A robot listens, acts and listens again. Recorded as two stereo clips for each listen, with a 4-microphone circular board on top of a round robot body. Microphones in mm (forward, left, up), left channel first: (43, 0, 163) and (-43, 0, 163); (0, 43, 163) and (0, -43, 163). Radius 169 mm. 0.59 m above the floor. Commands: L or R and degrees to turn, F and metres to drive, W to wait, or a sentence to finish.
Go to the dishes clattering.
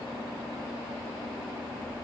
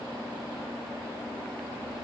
W
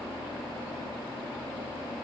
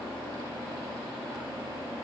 W
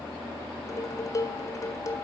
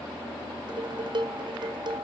R55
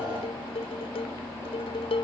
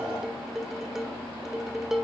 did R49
F1.0
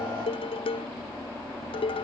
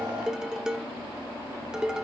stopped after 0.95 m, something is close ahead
Arrived at the dishes clattering, straight ahead.